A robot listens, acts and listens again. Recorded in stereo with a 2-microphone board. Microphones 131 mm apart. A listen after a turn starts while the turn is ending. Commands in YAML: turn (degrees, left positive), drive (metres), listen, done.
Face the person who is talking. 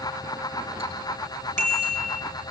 listen: true
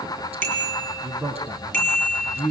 turn: -30
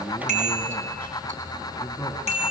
listen: true
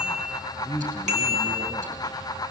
turn: 20
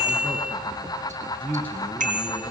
turn: 10
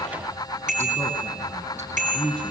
done: "Facing the man speaking."